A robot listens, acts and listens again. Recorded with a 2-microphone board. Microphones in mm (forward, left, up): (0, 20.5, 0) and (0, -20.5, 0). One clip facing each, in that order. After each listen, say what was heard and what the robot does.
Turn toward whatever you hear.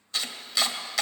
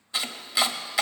The chopping: about 15° right or 165° right. Turn 15° right.
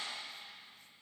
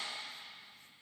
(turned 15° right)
Keep listening.
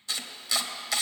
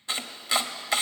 So it is at 150° right. Turn 150° right.
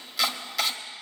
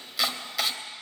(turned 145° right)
Found it: chopping, straight ahead.